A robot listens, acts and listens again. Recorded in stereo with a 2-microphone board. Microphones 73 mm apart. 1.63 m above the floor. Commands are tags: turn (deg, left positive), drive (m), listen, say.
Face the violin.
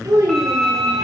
<turn deg="30"/>
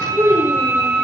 <turn deg="-30"/>
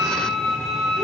<say>Facing the violin, 1 to 2 m away.</say>